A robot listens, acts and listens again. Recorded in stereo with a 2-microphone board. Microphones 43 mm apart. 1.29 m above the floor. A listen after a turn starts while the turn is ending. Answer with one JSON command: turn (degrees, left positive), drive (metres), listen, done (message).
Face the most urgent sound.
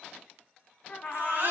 {"turn": -60}
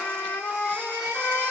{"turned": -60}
{"listen": true}
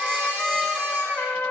{"listen": true}
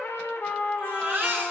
{"turn": -55}
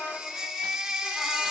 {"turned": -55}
{"done": "Found it: a baby crying, straight ahead, 2 to 4 m away."}